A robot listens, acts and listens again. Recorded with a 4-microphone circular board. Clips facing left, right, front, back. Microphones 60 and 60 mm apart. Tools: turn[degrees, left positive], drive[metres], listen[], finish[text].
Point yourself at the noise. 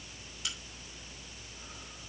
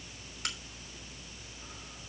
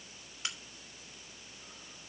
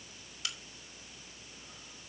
Thought: The crack: 60° right.
Action: turn[-60]
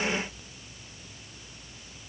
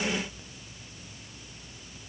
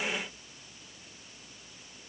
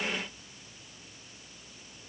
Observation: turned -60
Action: finish[Facing where the crack came from. I can't hear it now.]